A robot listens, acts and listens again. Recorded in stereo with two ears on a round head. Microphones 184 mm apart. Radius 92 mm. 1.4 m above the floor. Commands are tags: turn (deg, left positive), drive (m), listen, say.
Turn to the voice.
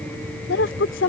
<turn deg="65"/>
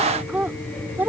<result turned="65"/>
<turn deg="-10"/>
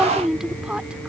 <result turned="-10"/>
<say>Facing the woman speaking.</say>